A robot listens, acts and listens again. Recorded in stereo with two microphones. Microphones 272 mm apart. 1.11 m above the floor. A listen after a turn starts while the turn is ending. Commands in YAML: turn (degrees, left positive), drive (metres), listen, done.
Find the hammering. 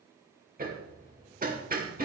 turn: -30
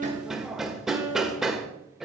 done: "Found it: hammering, straight ahead."